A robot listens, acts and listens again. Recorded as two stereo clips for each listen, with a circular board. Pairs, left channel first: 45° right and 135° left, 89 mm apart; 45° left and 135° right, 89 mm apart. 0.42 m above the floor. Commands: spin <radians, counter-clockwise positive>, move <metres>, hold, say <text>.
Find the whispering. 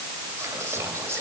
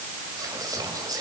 spin -2.97
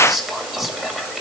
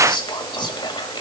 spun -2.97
spin 0.87
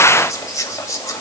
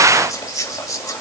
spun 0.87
say Facing the whispering.